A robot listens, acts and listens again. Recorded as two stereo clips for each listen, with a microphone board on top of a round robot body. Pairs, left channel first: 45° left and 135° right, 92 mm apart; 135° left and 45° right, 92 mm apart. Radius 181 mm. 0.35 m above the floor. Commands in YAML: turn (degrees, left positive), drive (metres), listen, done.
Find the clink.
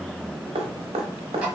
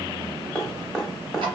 listen: true
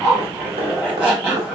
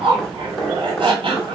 listen: true
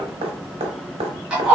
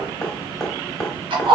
done: "I can't make out a clink to turn to."